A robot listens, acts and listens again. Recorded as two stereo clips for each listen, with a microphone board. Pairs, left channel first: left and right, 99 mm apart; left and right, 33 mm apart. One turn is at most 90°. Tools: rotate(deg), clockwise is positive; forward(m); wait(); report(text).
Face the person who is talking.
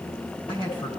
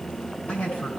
rotate(-55)
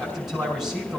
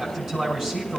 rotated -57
report("Found it: a man speaking, straight ahead.")